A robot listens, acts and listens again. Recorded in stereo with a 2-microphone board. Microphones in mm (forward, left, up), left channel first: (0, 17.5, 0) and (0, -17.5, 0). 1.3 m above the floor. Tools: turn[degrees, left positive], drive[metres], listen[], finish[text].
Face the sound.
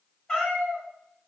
Thought: The cat meowing: about 20° left or 160° left.
Action: turn[20]
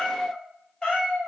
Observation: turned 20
Thought: The cat meowing: about 20° left or 160° left.
Action: turn[20]
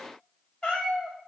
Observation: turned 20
Thought: The cat meowing: about 20° left or 160° left.
Action: turn[20]
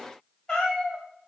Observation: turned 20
Thought: The cat meowing: about 15° left or 165° left.
Action: turn[15]
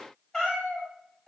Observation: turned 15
Action: turn[30]
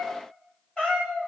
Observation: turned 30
Thought: So it is at 155° left.
Action: turn[155]
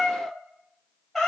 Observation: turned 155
Action: finish[Facing the cat meowing, 1 to 2 m away.]